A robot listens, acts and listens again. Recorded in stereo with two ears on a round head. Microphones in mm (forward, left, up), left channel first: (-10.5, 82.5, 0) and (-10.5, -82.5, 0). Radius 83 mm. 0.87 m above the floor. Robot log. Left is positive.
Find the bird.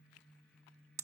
cmd idle
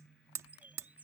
cmd yaw -30
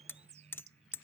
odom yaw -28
note: So it is at 140° right.
cmd yaw -140
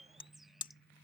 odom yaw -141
end: Found it: a bird, straight ahead.